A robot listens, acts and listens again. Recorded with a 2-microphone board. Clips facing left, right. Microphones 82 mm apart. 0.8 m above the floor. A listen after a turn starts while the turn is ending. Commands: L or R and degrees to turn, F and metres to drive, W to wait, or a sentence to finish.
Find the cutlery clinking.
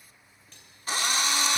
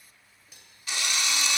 R30
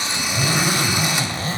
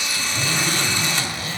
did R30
W
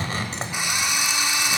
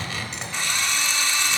W
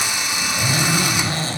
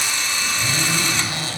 I heard cutlery clinking, but can't make it out now. It was about 20° left or 140° right.